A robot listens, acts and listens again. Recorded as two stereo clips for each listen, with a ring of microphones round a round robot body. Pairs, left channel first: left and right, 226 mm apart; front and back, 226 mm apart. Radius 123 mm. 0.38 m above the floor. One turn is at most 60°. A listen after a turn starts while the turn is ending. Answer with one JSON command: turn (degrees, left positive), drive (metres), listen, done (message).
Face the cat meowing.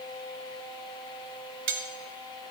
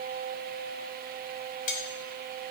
{"listen": true}
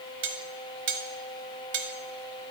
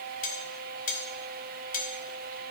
{"listen": true}
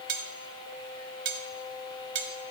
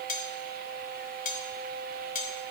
{"done": "I can't make out a cat meowing, only cutlery clinking."}